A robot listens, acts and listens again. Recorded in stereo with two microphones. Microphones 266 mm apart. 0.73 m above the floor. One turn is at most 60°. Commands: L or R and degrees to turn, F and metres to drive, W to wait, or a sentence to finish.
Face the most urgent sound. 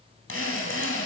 W
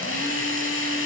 W
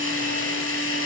I can't make out anything urgent, only a drill.